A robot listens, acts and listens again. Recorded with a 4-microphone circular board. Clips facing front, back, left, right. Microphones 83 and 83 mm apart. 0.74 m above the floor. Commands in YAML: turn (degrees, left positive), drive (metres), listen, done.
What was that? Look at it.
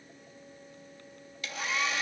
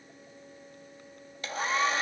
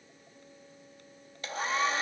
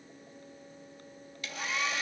turn: 135
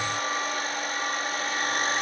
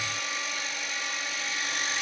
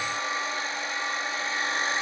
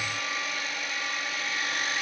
turn: 35
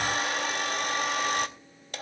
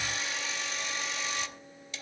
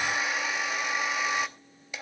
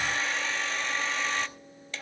turn: 15
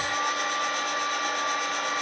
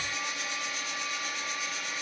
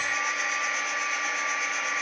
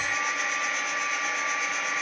done: "Facing the hair dryer, under 1 m away."